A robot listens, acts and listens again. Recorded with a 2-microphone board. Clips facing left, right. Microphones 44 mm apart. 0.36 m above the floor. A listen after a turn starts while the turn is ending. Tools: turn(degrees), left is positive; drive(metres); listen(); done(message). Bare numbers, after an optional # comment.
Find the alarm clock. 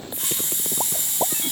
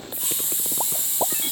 listen()
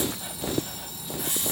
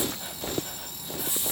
listen()
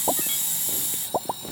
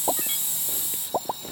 # The alarm clock: about 15° left or 165° left.
turn(15)
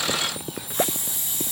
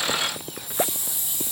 listen()
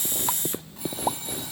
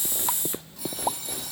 # So it is at 150° left.
turn(150)
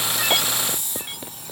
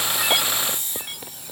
# The alarm clock is now 50° left.
turn(50)
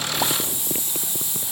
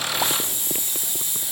listen()
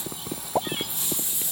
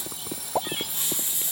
# The alarm clock is now 30° left.
turn(30)
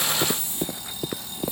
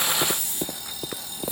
done("Facing the alarm clock.")